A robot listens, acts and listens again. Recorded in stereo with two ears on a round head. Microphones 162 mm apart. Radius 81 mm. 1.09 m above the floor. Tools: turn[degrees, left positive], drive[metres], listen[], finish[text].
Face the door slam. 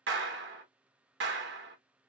Action: listen[]
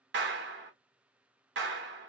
Action: listen[]
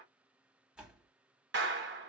Action: turn[-30]
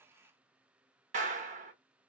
Action: listen[]
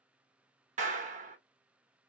Action: finish[I heard a door slam, but can't make it out now. It was about 25° left or 145° right.]